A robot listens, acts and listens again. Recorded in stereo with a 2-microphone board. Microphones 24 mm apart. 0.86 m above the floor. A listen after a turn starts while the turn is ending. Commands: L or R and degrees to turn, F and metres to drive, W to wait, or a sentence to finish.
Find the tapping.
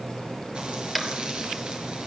L30
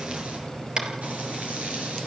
R35
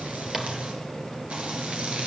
W
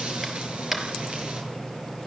R15
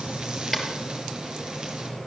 Facing the tapping, 2 to 4 m away.